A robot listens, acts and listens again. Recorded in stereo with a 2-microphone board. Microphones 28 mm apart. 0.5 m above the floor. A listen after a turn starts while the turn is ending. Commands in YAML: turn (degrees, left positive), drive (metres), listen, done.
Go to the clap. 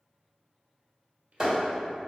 turn: -30
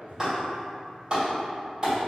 turn: -140
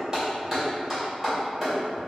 turn: -15
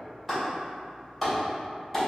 drive: 1.0
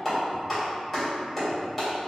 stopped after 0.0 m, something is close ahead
done: "Blocked. The clap is further on, straight ahead."